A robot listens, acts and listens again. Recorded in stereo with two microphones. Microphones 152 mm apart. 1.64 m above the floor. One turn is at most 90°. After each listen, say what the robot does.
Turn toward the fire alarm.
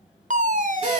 Turn 55° right.
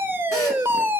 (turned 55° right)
Turn 15° right.
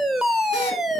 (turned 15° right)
Found it: a fire alarm, straight ahead.